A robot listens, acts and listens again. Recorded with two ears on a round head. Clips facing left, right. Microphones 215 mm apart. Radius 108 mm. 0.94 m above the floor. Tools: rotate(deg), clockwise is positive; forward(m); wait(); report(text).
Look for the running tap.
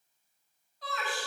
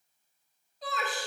wait()
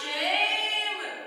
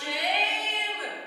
wait()
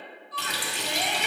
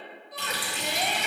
rotate(-55)
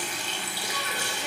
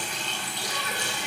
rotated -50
rotate(-10)
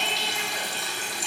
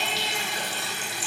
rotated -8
report("Facing the running tap.")